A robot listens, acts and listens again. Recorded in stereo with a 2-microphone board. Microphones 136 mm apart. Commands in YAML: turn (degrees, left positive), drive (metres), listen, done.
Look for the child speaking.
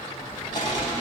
turn: -20
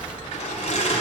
turn: -30
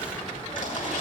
listen: true
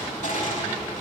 listen: true
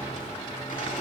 done: "I heard a child speaking, but can't make it out now. It was about 25° left or 145° right."